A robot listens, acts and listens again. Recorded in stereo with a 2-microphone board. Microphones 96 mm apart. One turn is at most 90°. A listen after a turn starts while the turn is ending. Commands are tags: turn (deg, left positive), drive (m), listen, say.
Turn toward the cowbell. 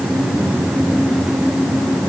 <listen/>
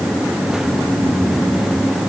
<listen/>
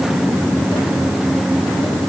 <say>I can't make out a cowbell to turn to.</say>